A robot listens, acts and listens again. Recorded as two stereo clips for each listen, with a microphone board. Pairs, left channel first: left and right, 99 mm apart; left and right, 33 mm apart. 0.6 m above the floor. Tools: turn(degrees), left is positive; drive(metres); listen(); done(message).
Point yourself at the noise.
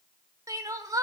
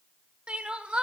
turn(degrees=-35)
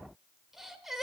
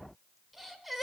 done("Found it: crying, straight ahead.")